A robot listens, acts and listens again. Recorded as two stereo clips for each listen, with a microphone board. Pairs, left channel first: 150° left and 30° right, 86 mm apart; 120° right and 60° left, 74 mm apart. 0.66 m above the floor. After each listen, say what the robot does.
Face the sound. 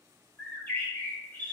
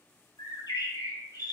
Turn 140° right.
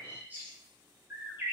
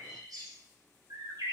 Turn 35° left.
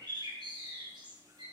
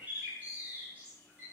Found it: a bird, straight ahead, 2 to 4 m away.